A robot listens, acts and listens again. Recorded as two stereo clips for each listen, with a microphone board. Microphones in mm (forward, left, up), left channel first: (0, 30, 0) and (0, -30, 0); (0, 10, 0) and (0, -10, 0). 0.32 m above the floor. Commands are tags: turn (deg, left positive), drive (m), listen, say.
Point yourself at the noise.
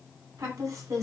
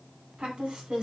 <turn deg="-65"/>
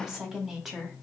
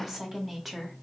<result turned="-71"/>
<say>Facing the woman speaking, 1 to 2 m away.</say>